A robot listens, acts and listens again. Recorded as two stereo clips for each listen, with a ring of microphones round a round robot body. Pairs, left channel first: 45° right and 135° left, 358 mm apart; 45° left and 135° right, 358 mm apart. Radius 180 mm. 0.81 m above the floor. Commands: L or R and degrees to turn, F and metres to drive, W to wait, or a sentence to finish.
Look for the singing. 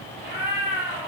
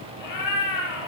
W
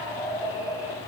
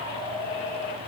W
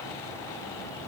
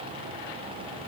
I can't make out singing, only a cat meowing.